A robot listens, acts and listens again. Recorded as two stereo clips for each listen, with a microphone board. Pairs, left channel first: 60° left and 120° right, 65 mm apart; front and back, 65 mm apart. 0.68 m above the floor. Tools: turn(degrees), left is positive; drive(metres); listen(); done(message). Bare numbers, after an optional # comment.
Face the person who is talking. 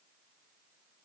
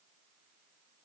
listen()
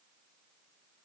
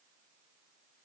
listen()
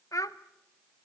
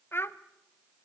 # The child speaking: 45° left.
turn(45)
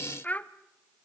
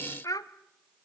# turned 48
done("Facing the child speaking, under 1 m away.")